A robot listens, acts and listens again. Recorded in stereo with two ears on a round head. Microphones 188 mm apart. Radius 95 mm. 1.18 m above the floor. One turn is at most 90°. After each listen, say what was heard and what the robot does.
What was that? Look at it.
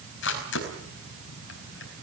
The camera shutter: about 65° left or 115° left. Turn 65° left.
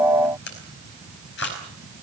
So it is at 55° left. Turn 55° left.
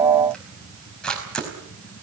Found it: a camera shutter, straight ahead.